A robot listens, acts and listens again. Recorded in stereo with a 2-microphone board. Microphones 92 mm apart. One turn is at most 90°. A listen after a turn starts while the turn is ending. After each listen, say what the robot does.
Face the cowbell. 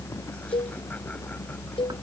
Turn 70° left.
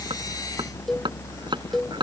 Found it: a cowbell, straight ahead.